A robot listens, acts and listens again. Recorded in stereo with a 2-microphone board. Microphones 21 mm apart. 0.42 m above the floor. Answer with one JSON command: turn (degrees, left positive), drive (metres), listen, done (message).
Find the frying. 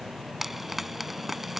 {"turn": -30}
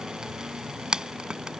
{"turn": -140}
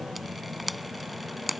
{"done": "Found it: frying, straight ahead."}